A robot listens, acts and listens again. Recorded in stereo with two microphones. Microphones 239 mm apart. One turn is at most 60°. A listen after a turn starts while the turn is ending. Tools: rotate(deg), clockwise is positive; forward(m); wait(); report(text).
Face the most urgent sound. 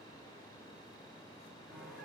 wait()
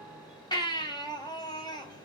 rotate(-20)
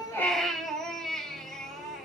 report("Found it: a baby crying, straight ahead, 1 to 2 m away.")